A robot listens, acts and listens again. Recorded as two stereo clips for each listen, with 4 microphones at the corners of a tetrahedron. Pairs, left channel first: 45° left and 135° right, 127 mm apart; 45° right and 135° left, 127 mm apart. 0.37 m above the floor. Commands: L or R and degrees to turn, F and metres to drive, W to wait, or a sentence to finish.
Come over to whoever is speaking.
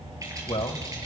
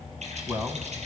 L60
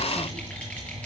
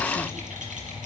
W
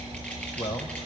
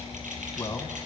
W
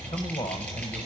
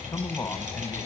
L25
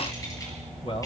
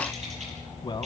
F1.0
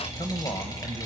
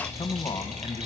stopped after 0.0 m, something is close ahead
Blocked. The man speaking is further on, straight ahead.